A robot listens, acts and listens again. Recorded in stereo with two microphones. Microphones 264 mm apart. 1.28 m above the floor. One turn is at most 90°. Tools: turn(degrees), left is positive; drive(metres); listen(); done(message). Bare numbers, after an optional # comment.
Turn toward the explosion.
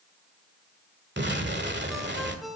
# The explosion: about 40° right or 140° right.
turn(-40)
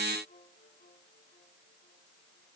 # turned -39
listen()
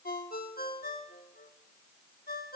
done("I heard an explosion, but can't make it out now. It was about 5° right or 100° right.")